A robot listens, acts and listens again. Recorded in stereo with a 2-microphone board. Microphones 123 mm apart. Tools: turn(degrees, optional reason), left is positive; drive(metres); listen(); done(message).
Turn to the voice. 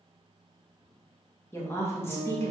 turn(degrees=20, reason="The woman speaking: about 20° left or 160° left.")
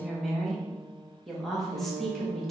done("Found it: a woman speaking, straight ahead.")